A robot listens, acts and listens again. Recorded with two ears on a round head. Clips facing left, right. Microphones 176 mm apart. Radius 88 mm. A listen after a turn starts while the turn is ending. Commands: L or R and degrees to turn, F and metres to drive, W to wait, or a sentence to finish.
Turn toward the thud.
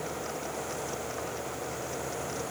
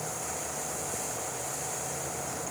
W
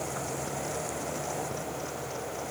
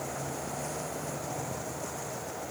W
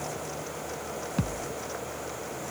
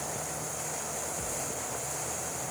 L90
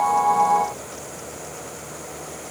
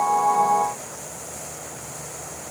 I heard a thud from this way, but can't make it out now.